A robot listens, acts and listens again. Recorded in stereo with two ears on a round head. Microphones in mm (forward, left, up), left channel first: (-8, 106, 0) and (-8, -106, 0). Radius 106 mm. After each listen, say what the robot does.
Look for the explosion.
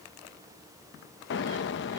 Turn 50° left.
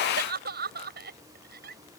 Keep listening.
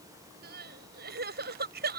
I heard an explosion, but can't make it out now. It was about straight ahead or 80° left.